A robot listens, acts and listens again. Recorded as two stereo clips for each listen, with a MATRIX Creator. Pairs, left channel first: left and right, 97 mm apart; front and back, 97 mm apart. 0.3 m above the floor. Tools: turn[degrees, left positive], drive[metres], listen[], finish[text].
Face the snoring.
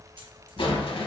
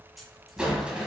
Thought: The snoring: 130° right.
Action: turn[-130]
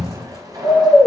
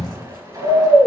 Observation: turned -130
Action: finish[Facing the snoring.]